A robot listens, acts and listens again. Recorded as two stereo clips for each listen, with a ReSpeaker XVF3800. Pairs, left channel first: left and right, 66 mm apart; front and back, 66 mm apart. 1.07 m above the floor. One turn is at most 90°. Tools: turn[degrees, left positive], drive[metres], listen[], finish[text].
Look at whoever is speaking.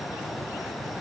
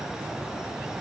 Action: listen[]
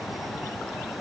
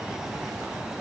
Action: listen[]
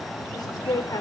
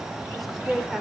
Thought: The woman speaking: 90° left.
Action: turn[90]
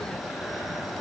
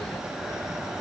Action: listen[]
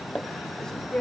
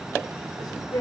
Thought: The woman speaking is now 10° left.
Action: turn[10]
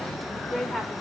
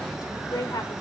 Action: finish[Found it: a woman speaking, straight ahead, 2 to 4 m away.]